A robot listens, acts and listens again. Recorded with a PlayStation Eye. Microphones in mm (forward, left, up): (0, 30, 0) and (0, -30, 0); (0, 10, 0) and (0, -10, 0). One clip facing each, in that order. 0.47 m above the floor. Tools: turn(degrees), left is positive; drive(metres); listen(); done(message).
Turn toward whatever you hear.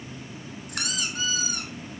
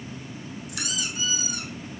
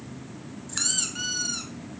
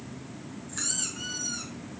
turn(degrees=55)
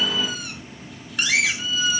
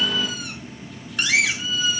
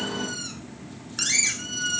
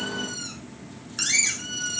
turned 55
done("Found it: a squeak, straight ahead.")